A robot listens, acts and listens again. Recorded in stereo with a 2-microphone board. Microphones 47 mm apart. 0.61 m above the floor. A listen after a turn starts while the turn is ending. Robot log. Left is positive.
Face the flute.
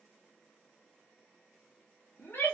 cmd idle
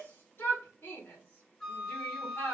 cmd yaw +30
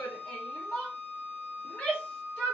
note: So it is at 145° left.
cmd yaw +145
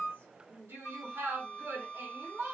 end: Facing the flute, 1 to 2 m away.